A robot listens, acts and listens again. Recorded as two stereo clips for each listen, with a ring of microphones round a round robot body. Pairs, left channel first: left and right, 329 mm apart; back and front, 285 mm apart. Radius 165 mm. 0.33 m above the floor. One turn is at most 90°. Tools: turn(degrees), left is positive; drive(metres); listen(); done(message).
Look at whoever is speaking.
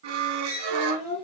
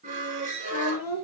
turn(degrees=-90)
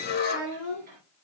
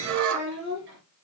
turn(degrees=-55)
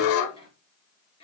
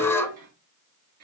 turn(degrees=15)
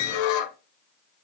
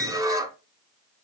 listen()
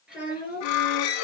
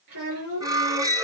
done("Found it: a child speaking, straight ahead.")